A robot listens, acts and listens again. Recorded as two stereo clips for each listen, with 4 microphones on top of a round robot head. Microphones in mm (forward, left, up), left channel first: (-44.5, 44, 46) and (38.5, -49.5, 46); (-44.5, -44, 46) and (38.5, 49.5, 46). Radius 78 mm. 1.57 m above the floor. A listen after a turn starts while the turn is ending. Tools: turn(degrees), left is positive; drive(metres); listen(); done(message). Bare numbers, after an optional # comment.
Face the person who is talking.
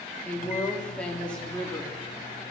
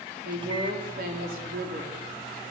# The woman speaking: 50° left.
turn(50)
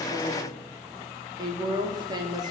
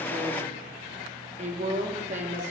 # The woman speaking is now 10° left.
turn(10)
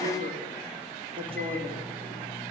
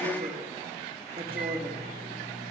done("Facing the woman speaking, over 4 m away.")